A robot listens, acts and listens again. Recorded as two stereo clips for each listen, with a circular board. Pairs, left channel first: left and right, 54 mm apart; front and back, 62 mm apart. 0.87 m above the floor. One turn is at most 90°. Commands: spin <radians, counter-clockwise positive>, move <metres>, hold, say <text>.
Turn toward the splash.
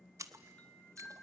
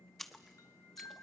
spin -1.48
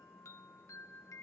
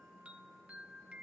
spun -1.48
say I heard a splash from this way, but can't make it out now.